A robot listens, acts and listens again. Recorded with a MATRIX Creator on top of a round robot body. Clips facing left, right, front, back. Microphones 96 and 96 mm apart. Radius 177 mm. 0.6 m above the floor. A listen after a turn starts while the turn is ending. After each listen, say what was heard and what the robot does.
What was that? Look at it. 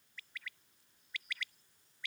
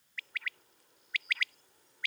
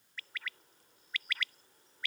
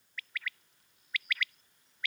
The bird: 55° right. Turn 55° right.
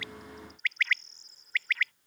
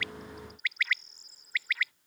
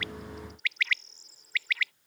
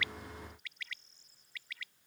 Facing the bird.